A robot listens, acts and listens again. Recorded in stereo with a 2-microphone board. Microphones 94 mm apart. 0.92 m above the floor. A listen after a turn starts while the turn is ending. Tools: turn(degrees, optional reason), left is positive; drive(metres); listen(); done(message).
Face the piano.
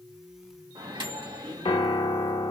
turn(degrees=90)
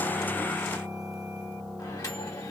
done("Found it: a piano, straight ahead, 1 to 2 m away.")